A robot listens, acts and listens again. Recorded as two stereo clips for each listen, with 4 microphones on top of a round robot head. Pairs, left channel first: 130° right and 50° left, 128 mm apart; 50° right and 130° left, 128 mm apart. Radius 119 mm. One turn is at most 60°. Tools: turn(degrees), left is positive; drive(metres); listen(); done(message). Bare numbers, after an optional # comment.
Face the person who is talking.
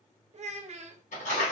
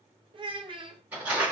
# The child speaking: 80° left.
turn(60)
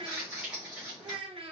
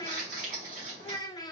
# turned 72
# The child speaking is now 10° left.
turn(10)
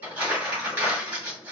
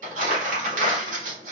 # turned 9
listen()
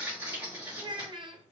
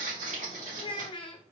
done("Facing the child speaking, under 1 m away.")